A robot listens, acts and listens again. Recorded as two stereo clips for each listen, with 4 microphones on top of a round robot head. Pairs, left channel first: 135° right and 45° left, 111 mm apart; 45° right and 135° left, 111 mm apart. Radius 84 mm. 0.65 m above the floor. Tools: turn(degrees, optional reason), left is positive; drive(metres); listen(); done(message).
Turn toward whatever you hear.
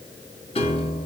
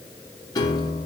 turn(degrees=-100, reason="The piano: 100° right.")
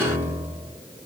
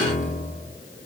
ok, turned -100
turn(degrees=-30, reason="The piano is now 30° right.")
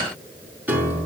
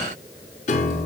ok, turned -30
turn(degrees=-35, reason="The piano is now 35° right.")
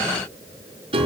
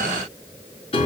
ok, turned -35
done("Found it: a piano, straight ahead, over 4 m away.")